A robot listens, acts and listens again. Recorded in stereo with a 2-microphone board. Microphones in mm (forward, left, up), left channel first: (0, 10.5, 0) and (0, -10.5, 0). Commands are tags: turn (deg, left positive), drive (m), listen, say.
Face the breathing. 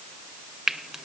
<listen/>
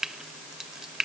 <listen/>
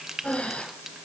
<turn deg="55"/>
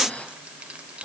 <turn deg="70"/>
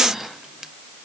<turn deg="-15"/>
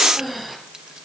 <say>Found it: breathing, straight ahead.</say>